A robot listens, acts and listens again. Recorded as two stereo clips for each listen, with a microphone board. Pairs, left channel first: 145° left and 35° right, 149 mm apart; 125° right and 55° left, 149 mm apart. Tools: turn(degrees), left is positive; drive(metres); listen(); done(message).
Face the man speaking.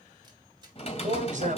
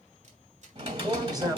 done("Found it: a man speaking, straight ahead, 2 to 4 m away.")